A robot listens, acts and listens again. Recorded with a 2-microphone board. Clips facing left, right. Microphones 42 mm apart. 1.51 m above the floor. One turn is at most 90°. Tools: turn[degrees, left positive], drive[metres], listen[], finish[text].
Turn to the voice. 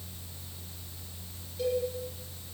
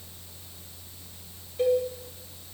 Action: listen[]
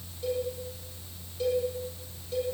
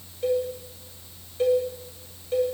Action: listen[]
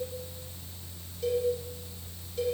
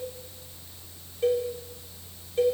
Action: finish[I can't make out anyone speaking, only a cowbell.]